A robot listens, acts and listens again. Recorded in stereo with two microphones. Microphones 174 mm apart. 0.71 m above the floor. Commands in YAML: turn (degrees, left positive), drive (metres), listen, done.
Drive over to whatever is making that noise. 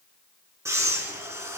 turn: -15
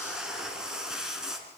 drive: 1.0
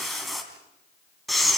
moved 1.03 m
drive: 1.0
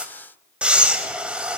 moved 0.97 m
drive: 1.0
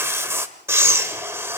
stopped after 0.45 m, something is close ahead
turn: -15
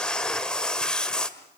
done: "I am next to the breathing."